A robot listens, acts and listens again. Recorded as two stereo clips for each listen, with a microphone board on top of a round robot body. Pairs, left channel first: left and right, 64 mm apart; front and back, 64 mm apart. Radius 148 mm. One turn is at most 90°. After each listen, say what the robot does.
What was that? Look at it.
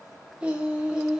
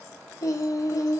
Turn 10° right.
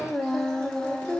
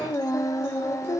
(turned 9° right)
Turn 20° left.
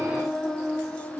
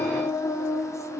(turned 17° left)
Turn 25° left.
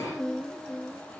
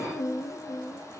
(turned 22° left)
Turn 20° left.
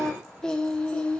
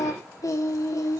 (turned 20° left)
Turn 20° left.
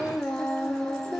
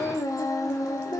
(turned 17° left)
Turn 10° left.
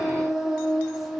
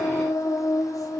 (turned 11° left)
Found it: singing, straight ahead, 1 to 2 m away.